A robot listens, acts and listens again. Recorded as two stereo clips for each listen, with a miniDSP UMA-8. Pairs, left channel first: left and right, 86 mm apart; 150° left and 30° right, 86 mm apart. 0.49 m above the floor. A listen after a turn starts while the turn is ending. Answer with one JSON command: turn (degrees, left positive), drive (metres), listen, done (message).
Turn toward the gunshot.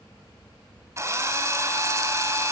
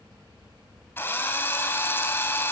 {"listen": true}
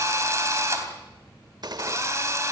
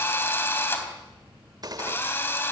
{"turn": -60}
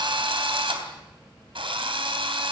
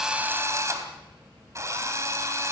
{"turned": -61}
{"done": "I heard a gunshot from this way, but can't make it out now."}